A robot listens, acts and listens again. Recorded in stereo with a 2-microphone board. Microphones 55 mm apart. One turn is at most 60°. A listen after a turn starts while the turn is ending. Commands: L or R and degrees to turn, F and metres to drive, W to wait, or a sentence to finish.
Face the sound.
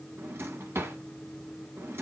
R50
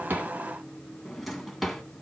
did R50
Found it: a drawer, straight ahead.